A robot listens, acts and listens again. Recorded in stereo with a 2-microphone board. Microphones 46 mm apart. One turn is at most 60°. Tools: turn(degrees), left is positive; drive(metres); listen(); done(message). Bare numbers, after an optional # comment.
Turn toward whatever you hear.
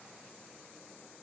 listen()
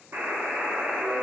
# The buzzer: about 55° right or 125° right.
turn(-55)
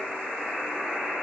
done("Found it: a buzzer, straight ahead.")